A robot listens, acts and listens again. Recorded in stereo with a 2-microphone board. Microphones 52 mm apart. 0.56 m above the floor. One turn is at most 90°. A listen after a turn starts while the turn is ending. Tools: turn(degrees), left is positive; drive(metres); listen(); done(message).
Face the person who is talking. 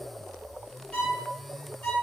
listen()
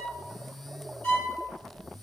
listen()
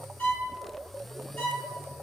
done("I can't make out anyone speaking to turn to.")